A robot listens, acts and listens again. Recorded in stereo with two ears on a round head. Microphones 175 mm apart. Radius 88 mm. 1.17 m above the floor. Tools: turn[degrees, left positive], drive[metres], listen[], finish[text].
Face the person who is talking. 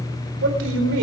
Action: turn[-90]
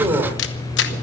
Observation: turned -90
Thought: So it is at 15° right.
Action: turn[-15]
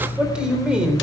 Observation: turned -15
Action: finish[Facing the man speaking.]